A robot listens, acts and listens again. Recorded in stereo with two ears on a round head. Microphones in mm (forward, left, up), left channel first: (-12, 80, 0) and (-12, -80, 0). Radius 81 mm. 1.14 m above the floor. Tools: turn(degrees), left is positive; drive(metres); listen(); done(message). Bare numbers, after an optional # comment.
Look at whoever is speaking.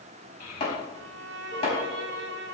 # The child speaking: about 50° left or 130° left.
turn(50)
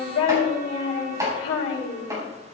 # So it is at 80° left.
turn(80)
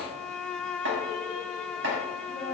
# The child speaking is now 25° left.
turn(25)
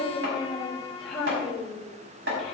done("Facing the child speaking.")